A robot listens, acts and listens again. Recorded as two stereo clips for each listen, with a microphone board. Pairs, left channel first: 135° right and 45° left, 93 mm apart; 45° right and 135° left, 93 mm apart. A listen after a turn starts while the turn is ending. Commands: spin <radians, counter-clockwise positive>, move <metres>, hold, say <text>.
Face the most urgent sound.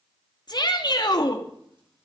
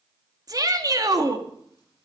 spin -3.05
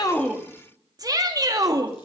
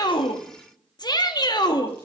say Facing the shout.